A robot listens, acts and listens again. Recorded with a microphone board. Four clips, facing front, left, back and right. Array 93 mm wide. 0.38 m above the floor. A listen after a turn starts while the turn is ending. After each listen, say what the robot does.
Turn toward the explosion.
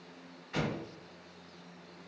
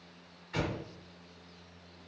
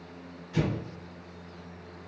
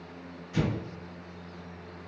Turn 40° left.
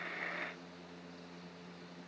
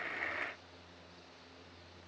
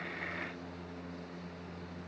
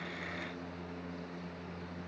I heard an explosion from this way, but can't make it out now.